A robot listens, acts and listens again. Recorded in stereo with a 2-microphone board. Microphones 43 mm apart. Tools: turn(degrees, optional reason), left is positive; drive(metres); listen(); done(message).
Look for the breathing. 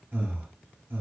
turn(degrees=-55, reason="The breathing: about 55° right or 125° right.")
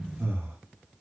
turn(degrees=-65, reason="So it is at 65° right.")
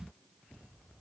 listen()
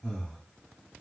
turn(degrees=15, reason="The breathing is now 15° left.")
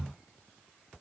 listen()
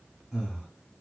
done("Facing the breathing.")